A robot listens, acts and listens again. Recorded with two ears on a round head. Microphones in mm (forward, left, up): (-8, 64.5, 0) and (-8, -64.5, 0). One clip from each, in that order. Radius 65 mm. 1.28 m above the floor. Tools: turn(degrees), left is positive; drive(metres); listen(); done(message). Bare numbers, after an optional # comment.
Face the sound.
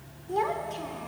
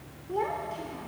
# The child speaking: about 65° left or 115° left.
turn(65)
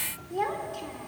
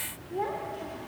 # So it is at 50° left.
turn(50)
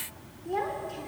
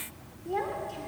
done("Found it: a child speaking, straight ahead, 2 to 4 m away.")